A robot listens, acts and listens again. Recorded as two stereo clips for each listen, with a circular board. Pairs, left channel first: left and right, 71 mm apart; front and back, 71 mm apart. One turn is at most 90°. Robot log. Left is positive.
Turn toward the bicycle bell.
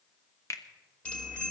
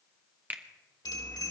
note: The bicycle bell: 15° left.
cmd yaw +15
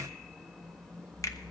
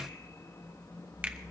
end: Facing the bicycle bell.